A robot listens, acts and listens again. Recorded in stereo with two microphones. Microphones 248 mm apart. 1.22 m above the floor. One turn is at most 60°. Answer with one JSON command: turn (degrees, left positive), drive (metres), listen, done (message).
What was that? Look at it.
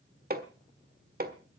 {"turn": -40}
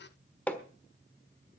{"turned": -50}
{"done": "Found it: hammering, straight ahead."}